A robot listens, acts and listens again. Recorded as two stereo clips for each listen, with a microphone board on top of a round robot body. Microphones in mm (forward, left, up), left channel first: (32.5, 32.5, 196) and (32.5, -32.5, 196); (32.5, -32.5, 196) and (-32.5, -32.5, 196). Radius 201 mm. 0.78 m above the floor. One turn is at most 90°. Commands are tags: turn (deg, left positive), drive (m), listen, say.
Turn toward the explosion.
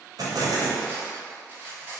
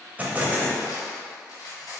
<turn deg="-90"/>
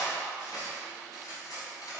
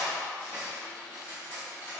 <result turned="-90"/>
<turn deg="-20"/>
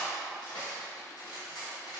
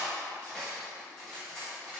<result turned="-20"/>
<say>Facing where the explosion came from. I can't hear it now.</say>